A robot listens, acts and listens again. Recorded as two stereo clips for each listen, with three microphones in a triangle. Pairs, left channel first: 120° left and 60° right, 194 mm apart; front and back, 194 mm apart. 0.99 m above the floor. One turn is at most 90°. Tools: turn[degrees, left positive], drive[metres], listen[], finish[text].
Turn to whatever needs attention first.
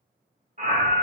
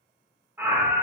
Thought: The scream: 100° right.
Action: turn[-90]
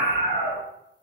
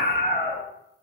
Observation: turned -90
Thought: The scream is now 35° right.
Action: turn[-35]
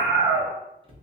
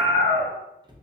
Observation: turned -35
Thought: The scream is now 10° left.
Action: turn[10]
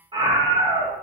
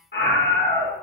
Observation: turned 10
Action: finish[Facing the scream, 1 to 2 m away.]